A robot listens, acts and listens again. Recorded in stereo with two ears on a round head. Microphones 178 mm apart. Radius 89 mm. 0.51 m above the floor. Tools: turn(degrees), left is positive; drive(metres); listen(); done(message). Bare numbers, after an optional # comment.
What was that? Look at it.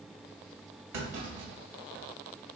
# The clunk: about 65° right or 115° right.
turn(-65)
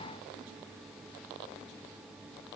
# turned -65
listen()
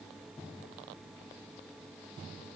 done("I heard a clunk, but can't make it out now. It was about straight ahead or 50° right.")